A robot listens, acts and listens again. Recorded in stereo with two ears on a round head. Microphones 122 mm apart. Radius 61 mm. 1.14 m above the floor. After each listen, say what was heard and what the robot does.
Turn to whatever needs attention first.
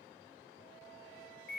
Keep listening.
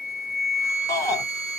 The shout: about 20° left or 160° left. Turn 20° left.
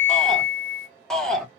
Found it: a shout, straight ahead, under 1 m away.